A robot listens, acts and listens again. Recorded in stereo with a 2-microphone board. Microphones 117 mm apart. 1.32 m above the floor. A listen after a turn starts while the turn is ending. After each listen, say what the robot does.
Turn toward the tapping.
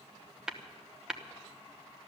Turn 30° right.
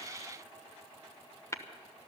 Turn 25° left.
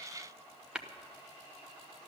Found it: tapping, straight ahead.